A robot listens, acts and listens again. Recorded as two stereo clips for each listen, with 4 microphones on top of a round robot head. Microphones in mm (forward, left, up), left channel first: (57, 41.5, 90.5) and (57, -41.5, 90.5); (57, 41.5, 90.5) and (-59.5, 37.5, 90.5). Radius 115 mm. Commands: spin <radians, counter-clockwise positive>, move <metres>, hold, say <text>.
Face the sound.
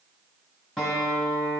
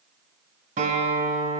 spin 3.14
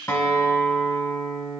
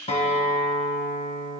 spin 0.61
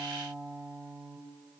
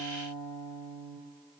say Found it: a guitar, straight ahead.